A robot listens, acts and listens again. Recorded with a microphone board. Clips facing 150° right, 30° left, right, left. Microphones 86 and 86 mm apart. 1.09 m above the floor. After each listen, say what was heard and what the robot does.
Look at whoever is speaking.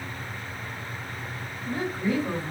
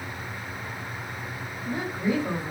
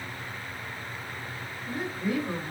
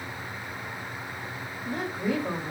The woman speaking: 105° left. Turn 105° left.
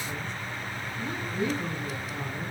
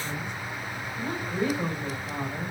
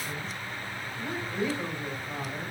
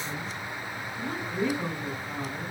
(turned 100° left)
Found it: a woman speaking, straight ahead, over 4 m away.